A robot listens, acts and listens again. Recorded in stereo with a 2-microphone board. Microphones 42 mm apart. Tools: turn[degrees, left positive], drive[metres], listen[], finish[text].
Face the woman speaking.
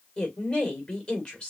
Thought: The woman speaking: about 30° left or 150° left.
Action: turn[30]
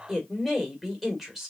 Action: finish[Found it: a woman speaking, straight ahead.]